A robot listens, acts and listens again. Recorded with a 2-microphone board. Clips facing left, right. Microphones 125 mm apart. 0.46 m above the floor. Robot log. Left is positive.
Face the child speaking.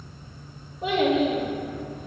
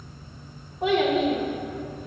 note: The child speaking: about 65° right or 115° right.
cmd yaw -65
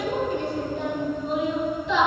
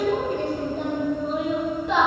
note: So it is at 55° right.
cmd yaw -55
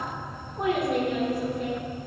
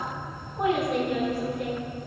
end: Facing the child speaking, over 4 m away.